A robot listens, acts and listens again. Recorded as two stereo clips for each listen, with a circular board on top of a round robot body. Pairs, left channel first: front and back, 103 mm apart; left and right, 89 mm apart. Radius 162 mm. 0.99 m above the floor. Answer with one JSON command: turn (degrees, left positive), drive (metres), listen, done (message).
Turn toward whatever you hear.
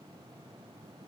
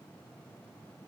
{"listen": true}
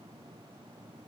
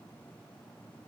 {"listen": true}
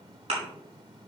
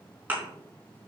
{"turn": -160}
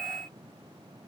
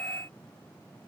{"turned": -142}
{"turn": -20}
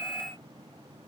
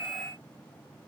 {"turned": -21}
{"done": "Facing where the thud came from. I can't hear it now."}